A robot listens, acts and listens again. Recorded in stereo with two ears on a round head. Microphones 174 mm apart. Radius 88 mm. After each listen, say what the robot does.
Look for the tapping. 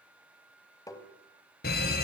Turn 20° left.
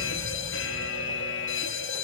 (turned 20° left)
Keep listening.
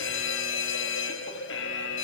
Keep listening.
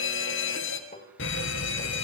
Turn 140° left.
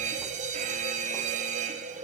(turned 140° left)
Keep listening.
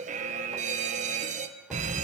Keep listening.
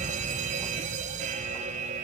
I heard tapping from this way, but can't make it out now.